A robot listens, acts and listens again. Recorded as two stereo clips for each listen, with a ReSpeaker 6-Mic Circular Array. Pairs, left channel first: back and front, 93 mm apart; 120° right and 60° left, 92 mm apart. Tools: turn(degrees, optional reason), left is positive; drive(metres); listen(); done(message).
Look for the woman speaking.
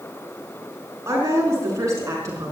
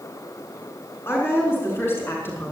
turn(degrees=-55, reason="The woman speaking: 55° right.")
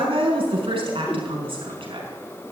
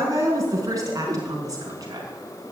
turn(degrees=10, reason="The woman speaking is now 10° left.")
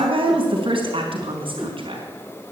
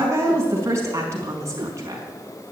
done("Found it: a woman speaking, straight ahead.")